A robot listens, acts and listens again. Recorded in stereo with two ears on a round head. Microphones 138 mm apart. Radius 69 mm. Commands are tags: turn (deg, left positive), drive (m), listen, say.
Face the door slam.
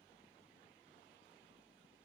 <listen/>
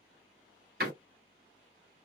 <turn deg="-75"/>
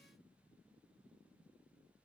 <listen/>
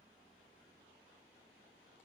<say>I heard a door slam, but can't make it out now. It was about straight ahead or 30° right.</say>